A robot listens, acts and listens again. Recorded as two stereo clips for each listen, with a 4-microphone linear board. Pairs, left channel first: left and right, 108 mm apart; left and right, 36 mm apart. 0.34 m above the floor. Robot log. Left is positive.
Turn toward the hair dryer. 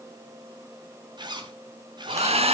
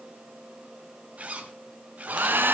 note: The hair dryer: about 70° right or 110° right.
cmd yaw -70
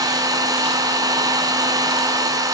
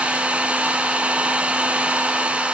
note: So it is at 35° right.
cmd yaw -35
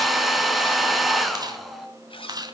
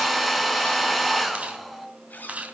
end: Facing the hair dryer.